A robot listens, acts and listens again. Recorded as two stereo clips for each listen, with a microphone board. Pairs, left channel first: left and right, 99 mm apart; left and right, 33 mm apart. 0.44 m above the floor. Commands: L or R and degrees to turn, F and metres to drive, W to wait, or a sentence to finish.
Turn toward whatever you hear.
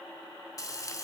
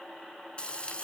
L40
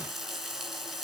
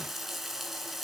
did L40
Facing the frying.